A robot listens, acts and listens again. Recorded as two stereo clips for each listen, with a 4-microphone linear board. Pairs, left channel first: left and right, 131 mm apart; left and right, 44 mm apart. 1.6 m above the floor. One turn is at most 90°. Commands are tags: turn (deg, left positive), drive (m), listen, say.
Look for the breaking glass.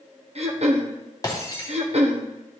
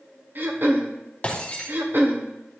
<turn deg="30"/>
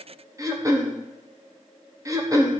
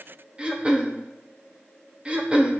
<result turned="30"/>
<listen/>
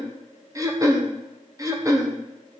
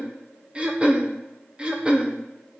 <say>I heard breaking glass, but can't make it out now. It was about straight ahead or 120° left.</say>